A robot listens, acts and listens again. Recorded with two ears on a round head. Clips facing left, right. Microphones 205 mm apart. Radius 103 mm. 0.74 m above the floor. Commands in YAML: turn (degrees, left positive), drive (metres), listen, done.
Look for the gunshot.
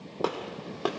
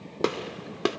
turn: -30
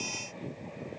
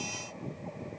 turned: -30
listen: true
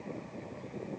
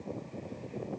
done: "I heard a gunshot, but can't make it out now. It was about straight ahead or 120° right."